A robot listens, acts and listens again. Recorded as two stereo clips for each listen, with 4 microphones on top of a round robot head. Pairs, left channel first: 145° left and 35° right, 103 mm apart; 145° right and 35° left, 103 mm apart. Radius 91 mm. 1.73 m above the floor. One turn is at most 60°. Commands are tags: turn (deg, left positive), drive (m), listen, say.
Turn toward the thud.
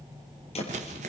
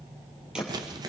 <turn deg="60"/>
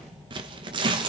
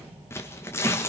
<turn deg="55"/>
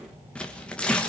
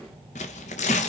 <say>I heard a thud from this way, but can't make it out now.</say>